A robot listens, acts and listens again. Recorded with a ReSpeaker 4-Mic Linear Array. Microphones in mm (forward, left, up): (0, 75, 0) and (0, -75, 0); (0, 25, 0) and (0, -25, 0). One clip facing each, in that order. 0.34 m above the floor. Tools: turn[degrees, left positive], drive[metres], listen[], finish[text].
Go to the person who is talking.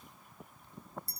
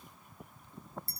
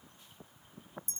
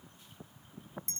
Action: listen[]
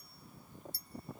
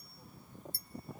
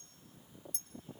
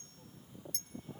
Action: listen[]
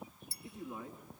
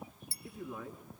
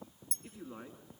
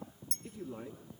Thought: The man speaking: about 25° left or 155° left.
Action: turn[25]
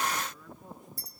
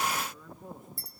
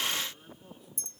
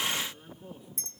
Action: drive[1.0]
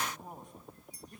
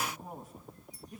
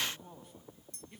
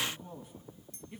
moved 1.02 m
Action: drive[1.0]
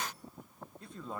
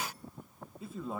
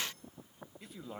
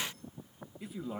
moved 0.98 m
Action: drive[1.0]
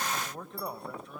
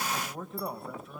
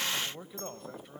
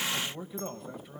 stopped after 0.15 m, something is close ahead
Action: finish[Arrived at the man speaking, straight ahead.]